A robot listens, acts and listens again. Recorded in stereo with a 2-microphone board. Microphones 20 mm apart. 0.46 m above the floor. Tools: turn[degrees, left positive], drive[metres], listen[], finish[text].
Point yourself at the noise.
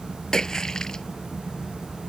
Thought: The splash: about 35° left or 145° left.
Action: turn[35]
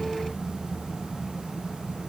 Action: listen[]
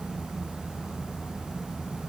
Action: finish[I heard a splash, but can't make it out now. It was about straight ahead or 110° left.]